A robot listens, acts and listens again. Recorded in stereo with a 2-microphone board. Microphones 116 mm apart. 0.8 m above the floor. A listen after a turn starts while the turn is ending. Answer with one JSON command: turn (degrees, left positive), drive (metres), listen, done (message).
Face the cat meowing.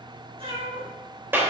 {"turn": -55}
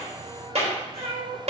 {"turn": -60}
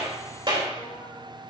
{"listen": true}
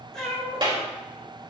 {"done": "Found it: a cat meowing, straight ahead."}